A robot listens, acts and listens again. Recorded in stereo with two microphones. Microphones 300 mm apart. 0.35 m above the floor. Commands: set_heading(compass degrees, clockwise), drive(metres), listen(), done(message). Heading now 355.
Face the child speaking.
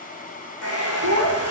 set_heading(65)
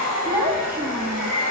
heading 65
set_heading(75)
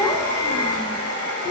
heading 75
set_heading(55)
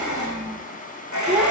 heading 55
done("Found it: a child speaking, straight ahead, 2 to 4 m away.")